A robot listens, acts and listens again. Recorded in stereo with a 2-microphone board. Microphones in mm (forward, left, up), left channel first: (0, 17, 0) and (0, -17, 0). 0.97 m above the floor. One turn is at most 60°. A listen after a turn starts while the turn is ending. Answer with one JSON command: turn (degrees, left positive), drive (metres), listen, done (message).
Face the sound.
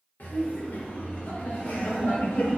{"turn": 60}
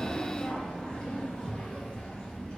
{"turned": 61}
{"turn": 30}
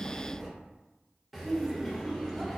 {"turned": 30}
{"done": "Facing the laughter."}